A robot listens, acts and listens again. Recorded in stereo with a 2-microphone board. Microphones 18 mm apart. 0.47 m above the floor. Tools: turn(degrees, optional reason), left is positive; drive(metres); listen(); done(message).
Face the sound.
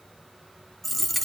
turn(degrees=30)
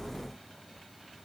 listen()
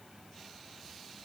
done("I heard a dropped coin, but can't make it out now. It was about 20° right or 140° left.")